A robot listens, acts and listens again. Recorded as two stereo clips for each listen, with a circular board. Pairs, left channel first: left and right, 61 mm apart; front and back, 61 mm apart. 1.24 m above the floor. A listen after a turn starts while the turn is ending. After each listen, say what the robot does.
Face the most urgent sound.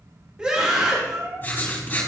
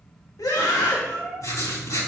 Turn 20° right.
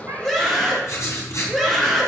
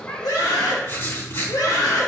Facing the scream.